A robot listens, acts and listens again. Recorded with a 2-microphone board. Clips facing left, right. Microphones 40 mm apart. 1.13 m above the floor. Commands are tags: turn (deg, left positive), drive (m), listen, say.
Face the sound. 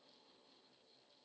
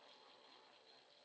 <listen/>
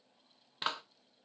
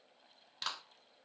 <turn deg="30"/>
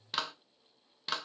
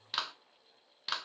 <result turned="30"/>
<say>Facing the clap, 1 to 2 m away.</say>